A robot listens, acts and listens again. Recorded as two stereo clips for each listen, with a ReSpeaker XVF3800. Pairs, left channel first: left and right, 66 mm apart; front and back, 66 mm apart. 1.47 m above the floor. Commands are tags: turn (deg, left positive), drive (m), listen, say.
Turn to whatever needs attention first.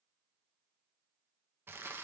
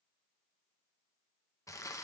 <listen/>
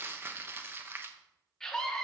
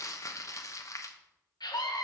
<say>Found it: a scream, straight ahead, 1 to 2 m away.</say>